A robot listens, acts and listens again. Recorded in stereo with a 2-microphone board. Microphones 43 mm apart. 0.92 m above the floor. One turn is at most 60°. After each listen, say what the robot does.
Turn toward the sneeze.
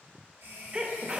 Turn 25° right.
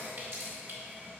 Keep listening.
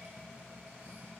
I heard a sneeze, but can't make it out now. It was about straight ahead or 130° right.